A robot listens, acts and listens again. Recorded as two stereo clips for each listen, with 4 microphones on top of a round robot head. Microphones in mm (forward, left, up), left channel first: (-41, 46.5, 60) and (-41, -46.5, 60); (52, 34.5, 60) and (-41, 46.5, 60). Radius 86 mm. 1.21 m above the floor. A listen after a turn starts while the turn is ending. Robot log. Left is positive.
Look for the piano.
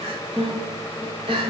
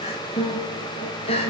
note: The piano: 15° right.
cmd yaw -15
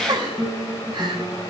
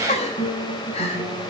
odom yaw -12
end: Facing the piano.